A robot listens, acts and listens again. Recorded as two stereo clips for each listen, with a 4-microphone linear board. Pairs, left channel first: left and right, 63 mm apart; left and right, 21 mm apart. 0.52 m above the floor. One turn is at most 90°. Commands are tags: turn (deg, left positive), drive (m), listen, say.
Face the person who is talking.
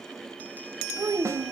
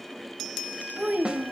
<turn deg="-90"/>
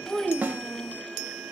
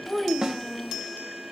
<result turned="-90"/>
<say>Facing the child speaking.</say>